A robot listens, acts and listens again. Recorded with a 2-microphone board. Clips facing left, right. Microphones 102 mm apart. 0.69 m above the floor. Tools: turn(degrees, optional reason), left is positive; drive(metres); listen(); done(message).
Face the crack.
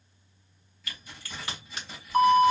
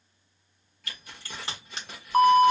turn(degrees=-30, reason="The crack: about 30° right or 150° right.")
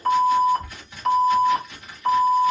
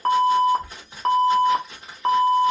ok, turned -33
listen()
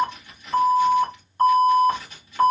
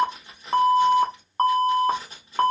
done("I heard a crack, but can't make it out now. It was about 5° left or 115° right.")